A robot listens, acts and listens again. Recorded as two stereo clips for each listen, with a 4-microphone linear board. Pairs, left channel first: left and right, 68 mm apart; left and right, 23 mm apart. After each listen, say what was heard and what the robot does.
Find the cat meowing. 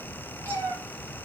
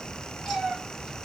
The cat meowing: about 25° left or 155° left. Turn 25° left.
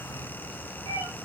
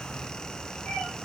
So it is at 130° left. Turn 130° left.
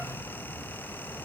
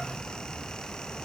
Keep listening.
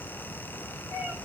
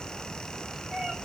The cat meowing is now 45° right. Turn 45° right.
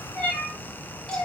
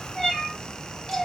The cat meowing is now 10° left. Turn 10° left.
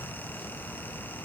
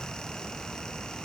Keep listening.
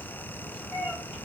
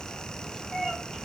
Facing the cat meowing.